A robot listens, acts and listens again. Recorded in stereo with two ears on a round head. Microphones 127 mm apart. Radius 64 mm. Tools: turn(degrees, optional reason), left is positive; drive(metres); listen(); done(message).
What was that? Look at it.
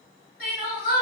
turn(degrees=65, reason="The crying: about 65° left or 115° left.")
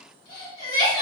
turn(degrees=45, reason="So it is at 45° left.")
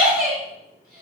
done("Found it: crying, straight ahead, 1 to 2 m away.")